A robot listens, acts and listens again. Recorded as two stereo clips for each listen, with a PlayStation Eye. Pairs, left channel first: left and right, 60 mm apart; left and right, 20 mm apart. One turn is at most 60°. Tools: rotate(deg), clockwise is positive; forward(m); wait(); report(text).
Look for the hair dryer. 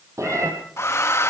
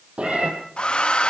rotate(-55)
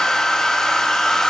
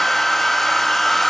rotate(-10)
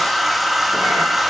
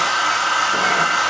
report("Facing the hair dryer.")